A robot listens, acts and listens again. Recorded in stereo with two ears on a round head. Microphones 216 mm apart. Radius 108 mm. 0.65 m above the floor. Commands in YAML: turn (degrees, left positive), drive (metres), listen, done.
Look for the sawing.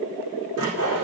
turn: -75
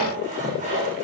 turn: -30
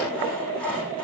done: "Found it: sawing, straight ahead, over 4 m away."